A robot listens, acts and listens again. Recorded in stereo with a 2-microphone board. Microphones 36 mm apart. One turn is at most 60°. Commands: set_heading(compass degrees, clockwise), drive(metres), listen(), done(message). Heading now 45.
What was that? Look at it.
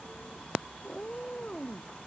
set_heading(25)
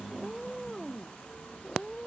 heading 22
done("Facing the cat meowing.")